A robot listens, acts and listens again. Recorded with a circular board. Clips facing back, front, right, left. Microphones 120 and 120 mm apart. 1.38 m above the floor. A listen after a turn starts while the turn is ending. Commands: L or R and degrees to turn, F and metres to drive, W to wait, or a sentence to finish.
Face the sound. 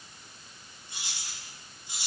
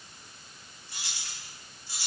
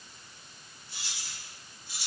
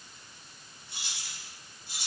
L110
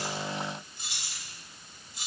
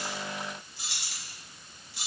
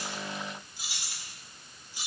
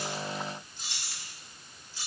R20
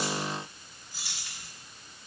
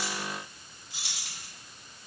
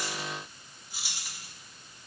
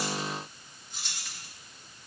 R10
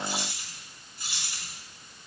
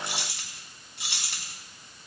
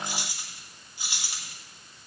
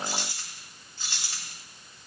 R10
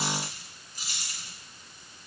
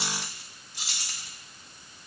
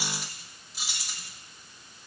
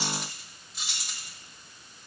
Found it: keys jangling, straight ahead, 1 to 2 m away.